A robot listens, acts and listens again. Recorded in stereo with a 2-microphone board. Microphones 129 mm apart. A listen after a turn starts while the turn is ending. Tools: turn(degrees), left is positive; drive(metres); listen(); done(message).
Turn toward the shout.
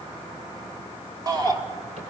turn(degrees=-30)
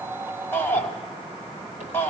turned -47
turn(degrees=15)
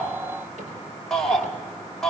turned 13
done("Found it: a shout, straight ahead, 2 to 4 m away.")